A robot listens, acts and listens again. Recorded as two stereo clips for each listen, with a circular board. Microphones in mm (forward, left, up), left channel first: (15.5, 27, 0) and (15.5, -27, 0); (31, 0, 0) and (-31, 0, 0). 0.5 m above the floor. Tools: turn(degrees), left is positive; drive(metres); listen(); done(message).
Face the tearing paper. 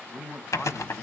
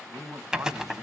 turn(degrees=100)
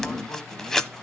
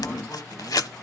turn(degrees=10)
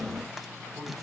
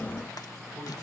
listen()
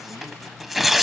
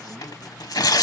done("Found it: tearing paper, straight ahead, under 1 m away.")